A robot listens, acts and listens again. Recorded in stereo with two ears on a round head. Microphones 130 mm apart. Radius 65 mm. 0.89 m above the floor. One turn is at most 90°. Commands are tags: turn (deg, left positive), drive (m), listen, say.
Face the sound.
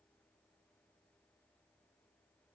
<listen/>
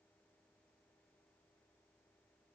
<listen/>
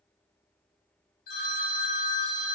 <turn deg="75"/>
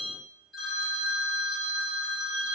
<say>Found it: a phone ringing, straight ahead.</say>